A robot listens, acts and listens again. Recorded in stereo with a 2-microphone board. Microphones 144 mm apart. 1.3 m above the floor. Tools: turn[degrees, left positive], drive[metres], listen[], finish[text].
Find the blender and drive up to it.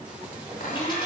Action: turn[90]
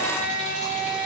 Thought: So it is at 10° right.
Action: turn[-10]
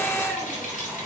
Action: drive[1.0]
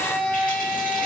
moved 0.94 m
Action: drive[1.0]
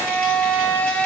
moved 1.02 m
Thought: The blender is now 10° left.
Action: turn[10]
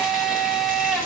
Action: drive[1.0]
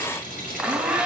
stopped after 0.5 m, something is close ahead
Action: finish[Arrived at the blender, straight ahead.]